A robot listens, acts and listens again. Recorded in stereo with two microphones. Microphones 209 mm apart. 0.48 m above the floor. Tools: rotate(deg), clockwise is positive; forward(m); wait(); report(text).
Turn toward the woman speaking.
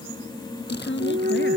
rotate(-65)
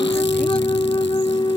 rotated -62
wait()
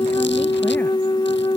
wait()
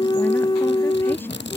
report("I heard a woman speaking, but can't make it out now. It was about straight ahead or 55° left.")